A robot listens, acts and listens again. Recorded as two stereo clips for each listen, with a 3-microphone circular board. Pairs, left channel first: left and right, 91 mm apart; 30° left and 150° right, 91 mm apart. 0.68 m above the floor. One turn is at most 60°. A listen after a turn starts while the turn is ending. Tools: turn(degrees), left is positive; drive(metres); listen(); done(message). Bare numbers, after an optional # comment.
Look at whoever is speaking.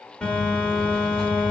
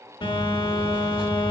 listen()
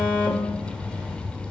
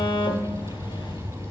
listen()
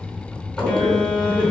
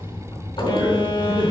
# The man speaking: 115° right.
turn(-60)
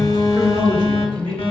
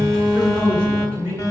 # The man speaking is now 65° right.
turn(-60)
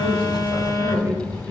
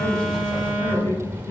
# The man speaking is now 20° right.
turn(-20)
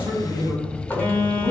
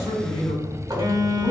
done("Found it: a man speaking, straight ahead, 2 to 4 m away.")